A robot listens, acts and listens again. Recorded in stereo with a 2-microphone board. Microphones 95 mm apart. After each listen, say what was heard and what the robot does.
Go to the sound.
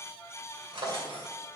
The drawer: about 65° right or 115° right. Turn 65° right.
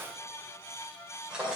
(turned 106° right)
So it is at 10° right. Turn 10° right.
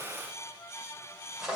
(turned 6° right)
Drive 1.0 m forward.
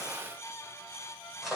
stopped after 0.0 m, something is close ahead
Something is in my way. I am facing the drawer but have not reached it.